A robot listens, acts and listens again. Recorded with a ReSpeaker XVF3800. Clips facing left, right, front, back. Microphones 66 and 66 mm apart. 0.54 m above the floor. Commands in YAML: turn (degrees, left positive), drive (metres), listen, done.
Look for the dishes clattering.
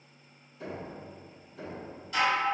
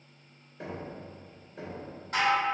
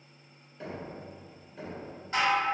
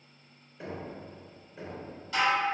turn: -55
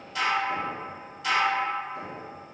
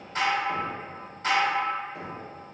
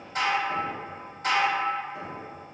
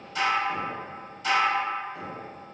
turn: -40
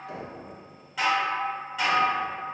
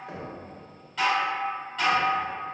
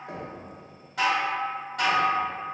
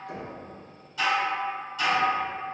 turn: 10
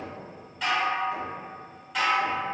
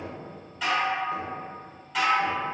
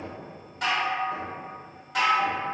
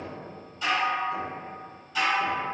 done: "Facing the dishes clattering."